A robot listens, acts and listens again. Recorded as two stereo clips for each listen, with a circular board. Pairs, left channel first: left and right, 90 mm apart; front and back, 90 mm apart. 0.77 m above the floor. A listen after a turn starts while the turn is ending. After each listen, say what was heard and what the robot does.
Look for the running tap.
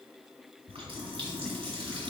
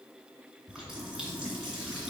The running tap: 100° right. Turn 100° right.
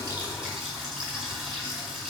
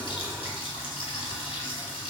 Facing the running tap.